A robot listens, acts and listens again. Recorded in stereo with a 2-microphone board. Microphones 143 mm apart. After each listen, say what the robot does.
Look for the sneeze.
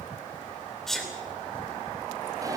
Turn 30° left.
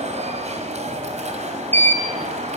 Keep listening.
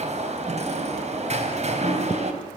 I heard a sneeze, but can't make it out now. It was about 30° right or 150° left.